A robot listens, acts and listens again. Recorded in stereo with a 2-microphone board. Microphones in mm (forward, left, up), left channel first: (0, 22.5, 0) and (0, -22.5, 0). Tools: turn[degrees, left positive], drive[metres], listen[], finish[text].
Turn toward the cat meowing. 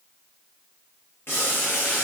Action: listen[]
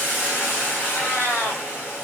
Action: turn[90]
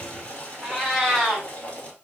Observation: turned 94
Action: finish[Facing the cat meowing.]